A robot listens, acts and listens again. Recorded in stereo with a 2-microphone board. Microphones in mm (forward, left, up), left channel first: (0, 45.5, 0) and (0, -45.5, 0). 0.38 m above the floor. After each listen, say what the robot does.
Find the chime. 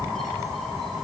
Keep listening.
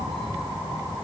Keep listening.
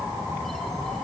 I can't make out a chime.